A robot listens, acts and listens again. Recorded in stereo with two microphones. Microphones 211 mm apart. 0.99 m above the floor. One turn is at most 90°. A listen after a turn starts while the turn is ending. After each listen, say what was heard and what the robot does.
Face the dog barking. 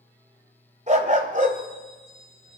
The dog barking: about 40° right or 140° right. Turn 40° right.
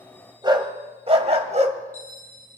The dog barking: about 35° right or 145° right. Turn 35° right.
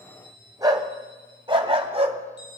So it is at 30° right. Turn 30° right.
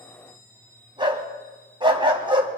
The dog barking is now 25° right. Turn 25° right.
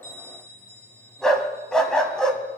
Found it: a dog barking, straight ahead, 2 to 4 m away.